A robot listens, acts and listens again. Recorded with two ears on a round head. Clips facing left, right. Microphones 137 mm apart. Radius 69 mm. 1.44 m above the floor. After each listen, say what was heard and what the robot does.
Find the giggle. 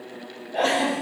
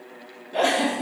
Turn 90° right.
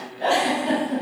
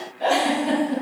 Found it: a giggle, straight ahead.